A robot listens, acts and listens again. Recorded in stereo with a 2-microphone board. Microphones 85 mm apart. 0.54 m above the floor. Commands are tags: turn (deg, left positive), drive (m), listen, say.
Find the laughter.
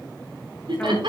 <turn deg="-90"/>
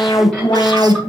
<listen/>
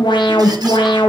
<listen/>
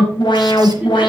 <say>Facing where the laughter came from. I can't hear it now.</say>